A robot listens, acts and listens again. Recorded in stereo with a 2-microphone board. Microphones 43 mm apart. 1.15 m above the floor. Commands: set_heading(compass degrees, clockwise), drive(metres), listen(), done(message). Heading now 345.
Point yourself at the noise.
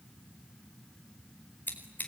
set_heading(305)
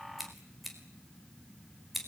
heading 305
done("Facing the scissors.")